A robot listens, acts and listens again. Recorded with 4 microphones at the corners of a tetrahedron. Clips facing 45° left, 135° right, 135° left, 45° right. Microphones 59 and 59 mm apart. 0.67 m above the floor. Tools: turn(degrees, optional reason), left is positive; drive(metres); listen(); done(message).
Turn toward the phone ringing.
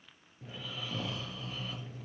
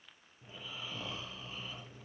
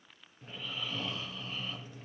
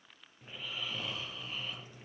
listen()
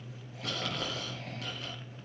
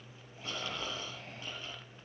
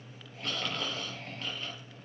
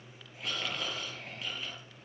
listen()
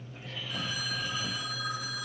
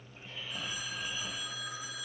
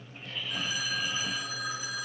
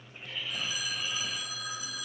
turn(degrees=70, reason="The phone ringing: 70° left.")
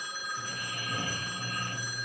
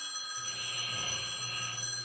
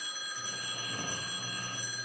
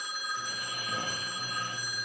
turn(degrees=-10, reason="The phone ringing is now 10° right.")
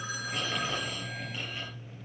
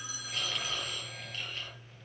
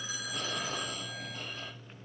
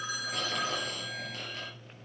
done("Facing the phone ringing, over 4 m away.")